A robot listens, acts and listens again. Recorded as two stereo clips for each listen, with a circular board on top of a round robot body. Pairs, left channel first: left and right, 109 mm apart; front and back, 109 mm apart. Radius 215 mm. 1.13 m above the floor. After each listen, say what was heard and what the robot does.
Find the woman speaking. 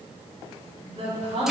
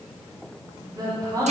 The woman speaking: 125° right. Turn 125° right.
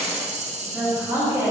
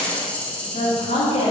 The woman speaking is now 20° right. Turn 20° right.
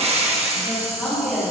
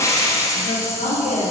Found it: a woman speaking, straight ahead.